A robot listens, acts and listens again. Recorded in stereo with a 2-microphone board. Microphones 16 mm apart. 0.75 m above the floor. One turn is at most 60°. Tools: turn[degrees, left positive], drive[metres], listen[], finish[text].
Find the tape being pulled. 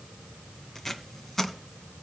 Thought: The tape being pulled: about 20° left or 160° left.
Action: turn[20]
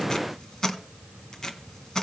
Thought: So it is at 140° left.
Action: turn[60]
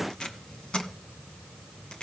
Thought: The tape being pulled is now 80° left.
Action: turn[60]
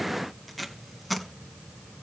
Thought: The tape being pulled is now 10° left.
Action: turn[10]
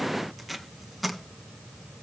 Action: finish[Facing the tape being pulled.]